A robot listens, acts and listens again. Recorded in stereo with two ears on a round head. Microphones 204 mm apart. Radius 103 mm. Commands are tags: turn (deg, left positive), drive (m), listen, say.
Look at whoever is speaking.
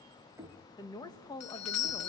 <turn deg="15"/>
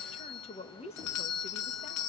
<turn deg="150"/>
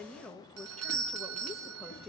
<say>Facing the woman speaking.</say>